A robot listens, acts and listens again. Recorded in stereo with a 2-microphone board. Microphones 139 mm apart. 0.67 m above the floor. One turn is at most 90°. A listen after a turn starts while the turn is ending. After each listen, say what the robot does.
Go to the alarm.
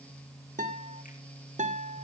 Keep listening.
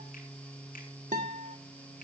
Keep listening.
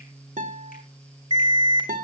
Turn 30° right.
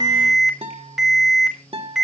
Drive 1.0 m forward.
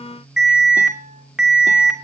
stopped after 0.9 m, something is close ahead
Blocked. The alarm is further on, straight ahead.